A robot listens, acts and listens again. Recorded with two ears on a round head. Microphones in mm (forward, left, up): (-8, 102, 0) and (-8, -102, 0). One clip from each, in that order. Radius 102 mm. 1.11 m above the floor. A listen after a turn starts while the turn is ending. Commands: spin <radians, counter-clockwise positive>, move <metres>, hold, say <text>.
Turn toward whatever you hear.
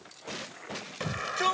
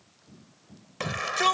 spin -0.35
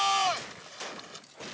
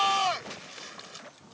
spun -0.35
say Facing the shout.